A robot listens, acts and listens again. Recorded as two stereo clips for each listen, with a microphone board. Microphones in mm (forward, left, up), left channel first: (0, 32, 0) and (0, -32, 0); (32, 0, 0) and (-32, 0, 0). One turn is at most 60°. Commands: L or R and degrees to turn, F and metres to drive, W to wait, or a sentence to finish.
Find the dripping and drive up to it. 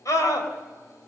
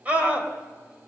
W
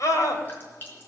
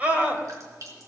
L60
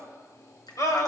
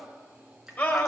L60
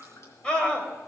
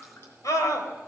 L50
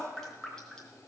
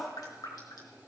F1.0
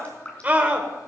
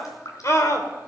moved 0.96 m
L20
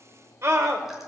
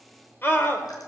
W
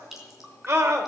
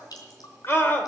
F1.0
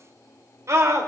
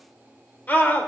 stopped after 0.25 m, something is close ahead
W
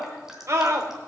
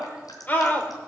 Blocked. The dripping is further on, straight ahead.